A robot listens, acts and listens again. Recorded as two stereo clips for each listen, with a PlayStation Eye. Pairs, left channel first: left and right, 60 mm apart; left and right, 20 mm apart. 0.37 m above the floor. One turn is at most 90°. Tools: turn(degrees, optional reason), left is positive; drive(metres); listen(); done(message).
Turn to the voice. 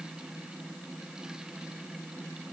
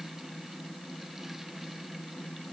listen()
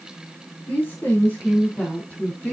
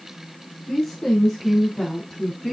turn(degrees=25, reason="The woman speaking: about 25° left or 155° left.")
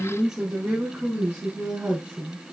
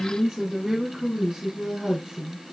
turn(degrees=-20, reason="So it is at 20° right.")
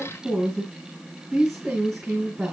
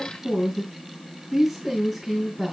done("Facing the woman speaking, 2 to 4 m away.")